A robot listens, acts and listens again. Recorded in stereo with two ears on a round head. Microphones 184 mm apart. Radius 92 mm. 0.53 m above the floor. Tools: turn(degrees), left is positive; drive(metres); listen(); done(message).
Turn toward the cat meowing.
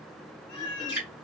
turn(degrees=90)
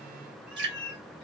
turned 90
done("Found it: a cat meowing, straight ahead.")